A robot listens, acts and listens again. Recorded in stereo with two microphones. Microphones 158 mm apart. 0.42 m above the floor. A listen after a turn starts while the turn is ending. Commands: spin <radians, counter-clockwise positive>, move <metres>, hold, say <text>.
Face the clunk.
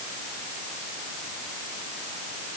hold
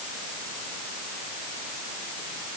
hold
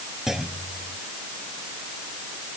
spin 0.52
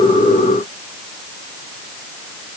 hold
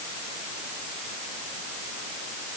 say I heard a clunk, but can't make it out now. It was about 30° right or 150° left.